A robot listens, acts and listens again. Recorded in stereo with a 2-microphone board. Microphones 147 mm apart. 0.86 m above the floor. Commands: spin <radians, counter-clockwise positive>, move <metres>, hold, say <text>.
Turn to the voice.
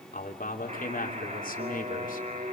spin 1.22
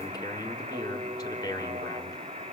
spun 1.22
spin 0.44
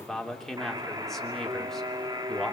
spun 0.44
say Facing the man speaking.